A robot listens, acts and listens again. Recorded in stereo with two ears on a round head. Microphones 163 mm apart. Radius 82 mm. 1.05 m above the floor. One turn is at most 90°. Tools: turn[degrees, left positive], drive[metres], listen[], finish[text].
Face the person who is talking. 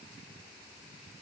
Action: listen[]
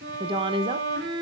Thought: The woman speaking: about 30° right or 150° right.
Action: turn[-30]
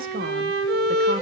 Thought: So it is at 115° right.
Action: turn[-90]
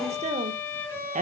Thought: The woman speaking is now 45° right.
Action: turn[-45]
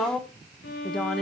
Action: finish[Found it: a woman speaking, straight ahead, under 1 m away.]